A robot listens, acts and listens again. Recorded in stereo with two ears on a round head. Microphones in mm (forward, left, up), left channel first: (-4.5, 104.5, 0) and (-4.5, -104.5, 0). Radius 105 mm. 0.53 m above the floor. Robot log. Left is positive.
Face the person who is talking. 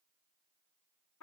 cmd idle
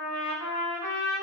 cmd idle
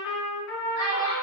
note: The child speaking: about 40° left or 140° left.
cmd yaw +40
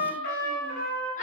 cmd idle
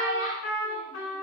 note: The child speaking: about 35° left or 145° left.
cmd yaw +35
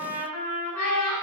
note: The child speaking: about 35° left or 145° left.
cmd yaw +35
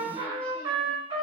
cmd idle
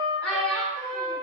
end: Found it: a child speaking, straight ahead, 1 to 2 m away.